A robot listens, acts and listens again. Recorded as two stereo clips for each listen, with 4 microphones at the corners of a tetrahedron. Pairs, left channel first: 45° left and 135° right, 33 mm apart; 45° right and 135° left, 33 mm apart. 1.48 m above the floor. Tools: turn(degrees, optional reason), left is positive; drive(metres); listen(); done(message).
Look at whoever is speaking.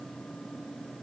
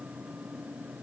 listen()
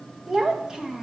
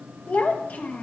turn(degrees=-65, reason="The child speaking: 65° right.")
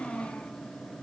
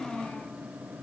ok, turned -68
done("Found it: a child speaking, straight ahead, 1 to 2 m away.")